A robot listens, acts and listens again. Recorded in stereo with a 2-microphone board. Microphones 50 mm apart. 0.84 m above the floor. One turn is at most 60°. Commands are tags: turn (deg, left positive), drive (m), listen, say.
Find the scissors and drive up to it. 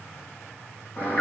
<listen/>
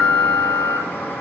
<listen/>
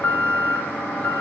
<say>I can't make out scissors to turn to.</say>